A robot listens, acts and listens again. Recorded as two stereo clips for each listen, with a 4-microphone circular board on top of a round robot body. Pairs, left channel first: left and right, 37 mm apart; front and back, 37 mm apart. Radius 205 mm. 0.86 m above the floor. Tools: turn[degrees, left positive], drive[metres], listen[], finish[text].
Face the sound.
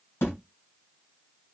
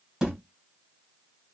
Thought: The thud: 110° left.
Action: turn[110]
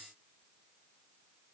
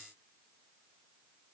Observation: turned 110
Action: finish[I heard a thud from this way, but can't make it out now.]